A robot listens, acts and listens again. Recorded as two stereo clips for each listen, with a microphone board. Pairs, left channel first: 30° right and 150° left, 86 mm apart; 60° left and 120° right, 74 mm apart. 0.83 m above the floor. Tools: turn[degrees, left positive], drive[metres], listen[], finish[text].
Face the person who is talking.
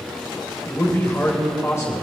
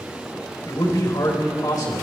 Thought: The man speaking: 25° left.
Action: turn[25]
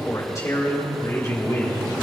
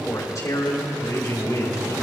Thought: The man speaking is now 20° left.
Action: turn[20]
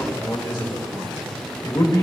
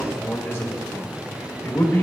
Action: finish[Facing the man speaking.]